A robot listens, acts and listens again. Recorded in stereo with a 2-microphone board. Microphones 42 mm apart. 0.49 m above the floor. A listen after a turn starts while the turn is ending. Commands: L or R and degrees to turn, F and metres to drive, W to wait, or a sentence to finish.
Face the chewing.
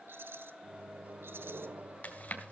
L45
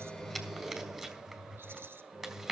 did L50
Facing the chewing.